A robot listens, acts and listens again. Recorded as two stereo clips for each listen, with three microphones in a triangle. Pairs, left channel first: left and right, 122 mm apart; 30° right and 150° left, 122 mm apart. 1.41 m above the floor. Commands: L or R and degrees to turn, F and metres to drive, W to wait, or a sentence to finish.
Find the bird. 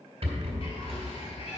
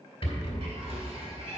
L110
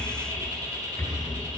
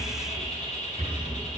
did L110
R30
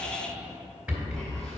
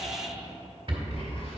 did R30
Found it: a bird, straight ahead, 2 to 4 m away.